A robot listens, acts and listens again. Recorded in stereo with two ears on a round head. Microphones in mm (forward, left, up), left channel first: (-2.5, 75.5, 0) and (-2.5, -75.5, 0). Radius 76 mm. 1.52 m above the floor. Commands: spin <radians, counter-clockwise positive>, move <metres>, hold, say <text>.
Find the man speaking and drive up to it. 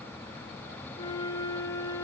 hold
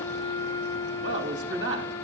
spin -1.57
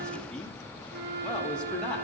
hold
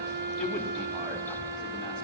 hold
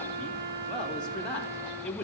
move 1.0
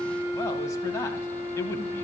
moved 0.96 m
hold
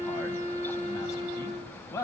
spin 0.35
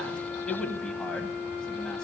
move 1.0
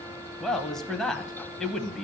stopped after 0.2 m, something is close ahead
say Arrived at the man speaking, straight ahead.